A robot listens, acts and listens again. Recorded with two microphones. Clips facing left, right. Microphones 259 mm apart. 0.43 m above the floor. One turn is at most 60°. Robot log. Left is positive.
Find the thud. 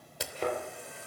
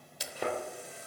cmd yaw -30
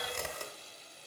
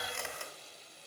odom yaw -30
cmd idle
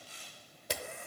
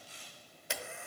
end: I heard a thud, but can't make it out now. It was about 20° left or 140° right.